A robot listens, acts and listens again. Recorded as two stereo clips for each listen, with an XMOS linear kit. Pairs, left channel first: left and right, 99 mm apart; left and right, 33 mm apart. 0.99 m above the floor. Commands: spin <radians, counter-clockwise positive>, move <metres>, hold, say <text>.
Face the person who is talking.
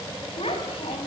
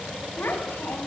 spin 1.31
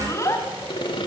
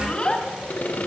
spin 0.52
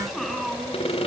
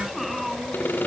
say Facing the child speaking.